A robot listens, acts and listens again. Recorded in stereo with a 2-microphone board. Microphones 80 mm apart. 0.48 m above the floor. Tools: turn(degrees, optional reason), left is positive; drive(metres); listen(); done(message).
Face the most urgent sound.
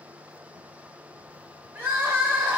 turn(degrees=-20, reason="The crying: about 20° right or 160° right.")
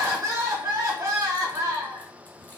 turn(degrees=-140, reason="So it is at 140° right.")
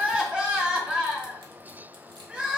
turn(degrees=-15, reason="The crying is now 15° right.")
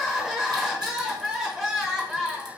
done("Facing the crying.")